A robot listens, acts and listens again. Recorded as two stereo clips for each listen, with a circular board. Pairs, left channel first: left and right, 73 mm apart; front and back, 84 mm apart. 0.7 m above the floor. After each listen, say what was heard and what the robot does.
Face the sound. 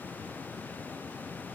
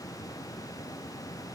Keep listening.
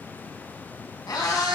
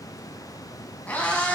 The cat meowing: 70° left. Turn 70° left.
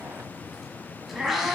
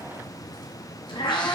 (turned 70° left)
Facing the cat meowing, 1 to 2 m away.